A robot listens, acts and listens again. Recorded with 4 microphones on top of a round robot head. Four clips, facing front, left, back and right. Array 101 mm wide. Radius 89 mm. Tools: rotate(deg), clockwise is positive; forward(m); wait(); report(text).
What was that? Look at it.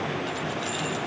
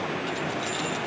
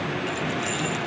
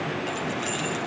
rotate(130)
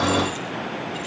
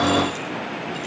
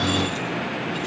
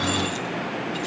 wait()
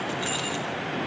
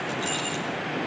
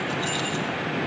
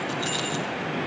rotate(25)
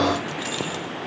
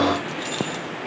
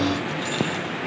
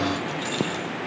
report("Found it: keys jangling, straight ahead.")